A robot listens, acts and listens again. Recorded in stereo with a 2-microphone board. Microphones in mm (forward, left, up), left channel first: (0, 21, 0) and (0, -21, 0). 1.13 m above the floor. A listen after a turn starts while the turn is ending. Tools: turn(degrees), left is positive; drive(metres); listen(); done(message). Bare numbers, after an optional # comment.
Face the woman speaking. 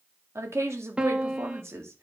# The woman speaking: about 70° right or 110° right.
turn(-70)
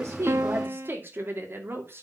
# So it is at 55° right.
turn(-55)
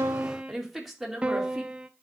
done("Found it: a woman speaking, straight ahead, 2 to 4 m away.")